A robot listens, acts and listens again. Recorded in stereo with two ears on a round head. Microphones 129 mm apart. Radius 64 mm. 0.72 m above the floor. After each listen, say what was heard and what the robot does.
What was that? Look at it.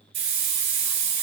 The hiss: about 45° right or 135° right. Turn 45° right.
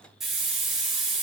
Facing the hiss, 2 to 4 m away.